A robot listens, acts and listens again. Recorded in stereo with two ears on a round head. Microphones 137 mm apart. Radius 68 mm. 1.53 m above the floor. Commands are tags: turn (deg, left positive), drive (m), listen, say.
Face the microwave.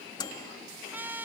<turn deg="25"/>
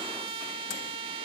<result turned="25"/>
<listen/>
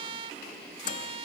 <turn deg="125"/>
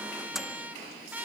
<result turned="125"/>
<say>Facing the microwave.</say>